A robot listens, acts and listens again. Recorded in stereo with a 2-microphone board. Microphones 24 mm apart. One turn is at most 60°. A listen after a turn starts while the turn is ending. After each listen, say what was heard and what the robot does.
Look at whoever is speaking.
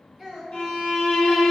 The child speaking: about 15° right or 165° right. Turn 15° right.
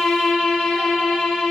Keep listening.
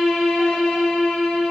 Keep listening.
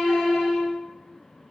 I heard a child speaking, but can't make it out now. It was about straight ahead or 150° right.